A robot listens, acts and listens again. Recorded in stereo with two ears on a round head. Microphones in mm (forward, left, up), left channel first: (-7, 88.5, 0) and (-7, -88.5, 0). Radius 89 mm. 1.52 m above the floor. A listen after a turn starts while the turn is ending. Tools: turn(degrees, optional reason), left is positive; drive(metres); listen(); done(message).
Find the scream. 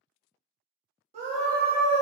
turn(degrees=-35, reason="The scream: about 35° right or 145° right.")
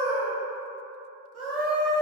done("Facing the scream, 1 to 2 m away.")